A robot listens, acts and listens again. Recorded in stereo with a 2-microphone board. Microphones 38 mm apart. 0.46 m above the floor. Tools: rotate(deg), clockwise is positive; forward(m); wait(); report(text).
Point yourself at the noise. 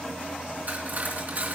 rotate(50)
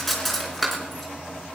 report("Facing the cutlery clinking, 2 to 4 m away.")